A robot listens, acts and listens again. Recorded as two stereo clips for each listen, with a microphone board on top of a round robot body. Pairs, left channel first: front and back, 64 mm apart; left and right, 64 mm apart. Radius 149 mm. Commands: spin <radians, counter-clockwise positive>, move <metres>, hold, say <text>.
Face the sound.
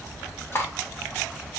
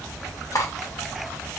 spin 0.96
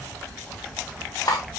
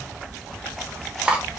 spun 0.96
spin -0.35
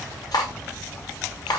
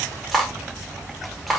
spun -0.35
say Found it: cutlery clinking, straight ahead.